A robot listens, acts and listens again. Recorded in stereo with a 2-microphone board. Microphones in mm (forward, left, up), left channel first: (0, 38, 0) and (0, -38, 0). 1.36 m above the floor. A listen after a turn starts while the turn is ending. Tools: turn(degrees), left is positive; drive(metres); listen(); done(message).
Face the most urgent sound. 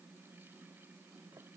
listen()
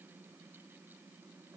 listen()
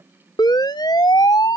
turn(degrees=70)
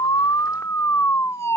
turn(degrees=40)
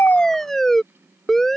done("Facing the siren.")